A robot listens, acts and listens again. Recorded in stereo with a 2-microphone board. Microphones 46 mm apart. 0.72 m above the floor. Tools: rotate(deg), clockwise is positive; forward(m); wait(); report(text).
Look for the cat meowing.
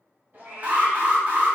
rotate(45)
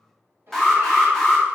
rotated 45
rotate(85)
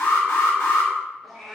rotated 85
report("Found it: a cat meowing, straight ahead, under 1 m away.")